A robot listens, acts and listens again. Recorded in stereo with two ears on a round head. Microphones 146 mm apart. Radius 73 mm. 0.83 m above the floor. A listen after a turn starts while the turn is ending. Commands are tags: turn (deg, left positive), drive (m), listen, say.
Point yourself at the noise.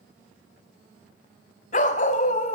<turn deg="50"/>
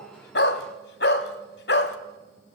<turn deg="80"/>
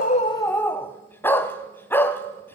<turn deg="15"/>
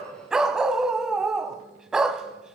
<say>Found it: a dog barking, straight ahead.</say>